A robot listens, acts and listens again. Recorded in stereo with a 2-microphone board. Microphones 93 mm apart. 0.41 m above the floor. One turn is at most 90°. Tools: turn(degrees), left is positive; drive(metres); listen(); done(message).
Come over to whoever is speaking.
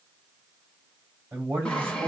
turn(degrees=-25)
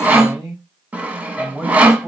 drive(metres=1.0)
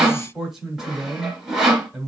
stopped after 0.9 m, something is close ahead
turn(degrees=-10)
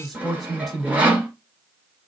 done("Arrived at the man speaking, straight ahead.")